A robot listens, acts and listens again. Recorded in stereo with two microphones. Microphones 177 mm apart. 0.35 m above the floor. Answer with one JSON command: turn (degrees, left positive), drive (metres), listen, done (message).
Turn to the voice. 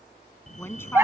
{"turn": 30}
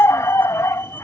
{"listen": true}
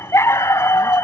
{"listen": true}
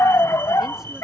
{"done": "I heard a woman speaking, but can't make it out now. It was about 15° right or 135° left."}